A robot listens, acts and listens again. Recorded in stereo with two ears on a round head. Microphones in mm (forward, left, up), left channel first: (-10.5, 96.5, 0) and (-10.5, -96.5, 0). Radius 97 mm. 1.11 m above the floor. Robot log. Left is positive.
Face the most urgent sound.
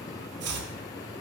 cmd idle
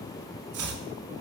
cmd idle
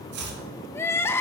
cmd yaw +30
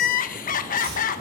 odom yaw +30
note: So it is at 135° left.
cmd yaw +135
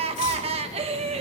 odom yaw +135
note: The crying is now 30° right.
cmd yaw -30
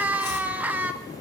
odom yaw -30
note: The crying is now 10° right.
cmd yaw -10
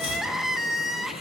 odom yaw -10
end: Found it: crying, straight ahead.